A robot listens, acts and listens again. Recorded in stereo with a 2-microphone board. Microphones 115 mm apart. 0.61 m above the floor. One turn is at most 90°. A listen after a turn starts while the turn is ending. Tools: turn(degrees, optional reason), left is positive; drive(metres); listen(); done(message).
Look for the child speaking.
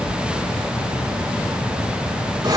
listen()
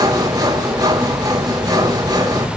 listen()
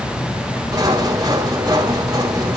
done("I can't make out a child speaking to turn to.")